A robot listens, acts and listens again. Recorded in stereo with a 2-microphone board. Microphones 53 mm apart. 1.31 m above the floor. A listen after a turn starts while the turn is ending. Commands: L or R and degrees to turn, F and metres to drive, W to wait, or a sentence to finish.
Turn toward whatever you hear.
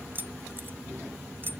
R40
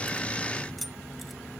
Found it: keys jangling, straight ahead.